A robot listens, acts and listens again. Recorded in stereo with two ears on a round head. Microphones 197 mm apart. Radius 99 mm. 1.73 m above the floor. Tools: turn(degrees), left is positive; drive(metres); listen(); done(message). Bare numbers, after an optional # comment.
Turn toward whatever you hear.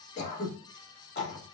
# The throat clearing: about 50° left or 130° left.
turn(50)
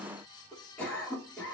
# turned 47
done("Facing the throat clearing, 2 to 4 m away.")